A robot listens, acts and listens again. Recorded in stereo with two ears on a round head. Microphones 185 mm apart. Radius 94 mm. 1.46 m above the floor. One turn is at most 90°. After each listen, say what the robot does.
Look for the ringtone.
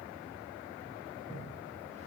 Keep listening.
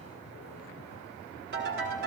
Turn 60° right.
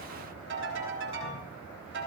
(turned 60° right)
Turn 60° right.
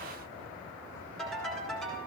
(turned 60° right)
Found it: a ringtone, straight ahead.